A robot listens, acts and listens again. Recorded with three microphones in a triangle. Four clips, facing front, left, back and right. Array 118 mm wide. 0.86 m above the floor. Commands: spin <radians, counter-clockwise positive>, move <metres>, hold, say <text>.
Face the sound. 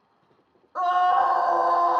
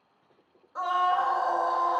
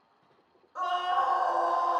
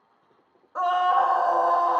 spin -0.79
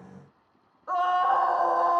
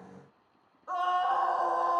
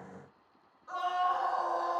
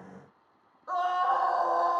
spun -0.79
spin -0.26
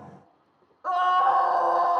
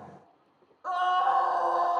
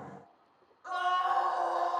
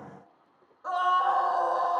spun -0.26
say Found it: a scream, straight ahead.